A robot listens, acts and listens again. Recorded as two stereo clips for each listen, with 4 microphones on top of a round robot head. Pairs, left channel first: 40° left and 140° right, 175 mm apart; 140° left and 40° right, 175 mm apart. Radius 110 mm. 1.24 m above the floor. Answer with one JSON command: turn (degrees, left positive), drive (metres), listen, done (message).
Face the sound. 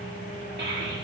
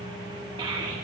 {"turn": -105}
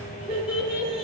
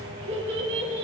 {"turn": -55}
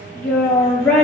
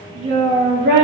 {"turn": -40}
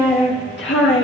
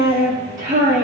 {"turn": 10}
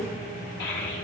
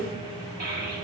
{"done": "Facing the child speaking, 2 to 4 m away."}